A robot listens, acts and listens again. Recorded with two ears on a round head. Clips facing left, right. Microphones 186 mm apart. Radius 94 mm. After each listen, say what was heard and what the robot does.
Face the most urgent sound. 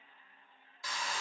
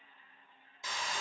Keep listening.
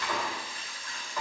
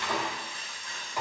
Keep listening.
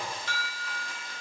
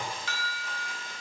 The alarm: about 65° right or 115° right. Turn 65° right.
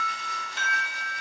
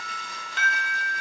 So it is at 50° right. Turn 50° right.
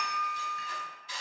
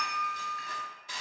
Facing the alarm, under 1 m away.